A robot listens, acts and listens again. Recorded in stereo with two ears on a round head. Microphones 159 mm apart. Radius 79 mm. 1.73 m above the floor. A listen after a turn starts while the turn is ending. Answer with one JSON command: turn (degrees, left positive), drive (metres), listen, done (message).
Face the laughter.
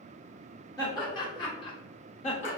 {"turn": 35}
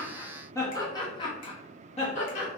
{"turn": 40}
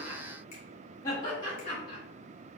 {"turn": 30}
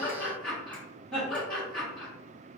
{"done": "Facing the laughter."}